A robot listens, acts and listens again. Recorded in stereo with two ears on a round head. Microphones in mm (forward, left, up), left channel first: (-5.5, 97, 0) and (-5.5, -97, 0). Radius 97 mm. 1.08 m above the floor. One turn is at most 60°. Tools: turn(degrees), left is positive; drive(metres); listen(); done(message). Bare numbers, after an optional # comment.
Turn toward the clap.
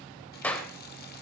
turn(30)
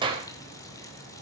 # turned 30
# So it is at 20° right.
turn(-20)
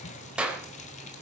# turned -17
done("Found it: a clap, straight ahead, 2 to 4 m away.")